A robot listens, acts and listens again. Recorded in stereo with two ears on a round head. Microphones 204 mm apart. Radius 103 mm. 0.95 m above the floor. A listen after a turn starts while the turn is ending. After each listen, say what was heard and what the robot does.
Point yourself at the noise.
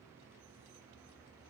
Keep listening.
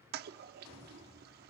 The toilet flushing: about 40° right or 140° right. Turn 40° right.
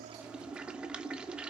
Facing the toilet flushing, under 1 m away.